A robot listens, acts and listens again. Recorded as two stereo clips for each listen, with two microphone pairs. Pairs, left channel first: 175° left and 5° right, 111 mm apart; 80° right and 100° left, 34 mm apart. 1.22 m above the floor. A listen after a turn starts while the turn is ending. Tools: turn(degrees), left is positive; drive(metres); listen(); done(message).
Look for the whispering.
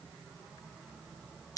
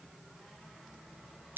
listen()
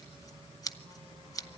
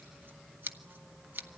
listen()
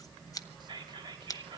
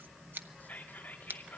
turn(degrees=-50)
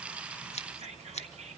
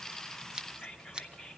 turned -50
done("Found it: whispering, straight ahead, 2 to 4 m away.")